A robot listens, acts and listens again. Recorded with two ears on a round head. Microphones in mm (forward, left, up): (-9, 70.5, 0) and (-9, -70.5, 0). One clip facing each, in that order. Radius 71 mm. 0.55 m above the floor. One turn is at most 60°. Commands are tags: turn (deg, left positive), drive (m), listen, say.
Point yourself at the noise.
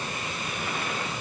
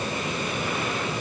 <listen/>
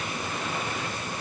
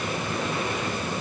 <listen/>
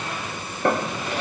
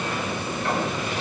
<turn deg="50"/>
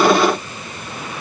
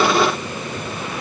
<listen/>
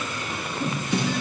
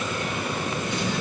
<turn deg="60"/>
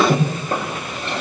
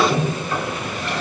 <turn deg="25"/>
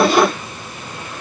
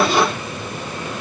<listen/>
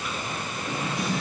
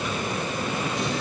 <say>Found it: a drawer, straight ahead.</say>